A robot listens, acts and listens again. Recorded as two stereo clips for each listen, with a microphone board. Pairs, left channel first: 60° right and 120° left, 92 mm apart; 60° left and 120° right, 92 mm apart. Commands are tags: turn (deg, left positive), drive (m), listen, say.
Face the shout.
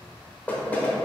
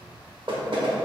<listen/>
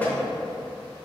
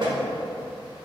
<listen/>
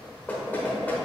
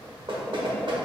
<say>I can't make out a shout, only knocking.</say>